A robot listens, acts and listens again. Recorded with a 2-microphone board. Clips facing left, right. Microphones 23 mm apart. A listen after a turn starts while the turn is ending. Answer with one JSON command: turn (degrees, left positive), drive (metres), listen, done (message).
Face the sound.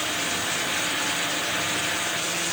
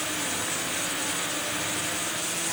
{"listen": true}
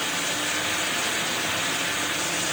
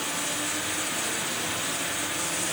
{"listen": true}
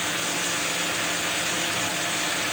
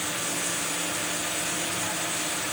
{"done": "I can't make out anything to turn to."}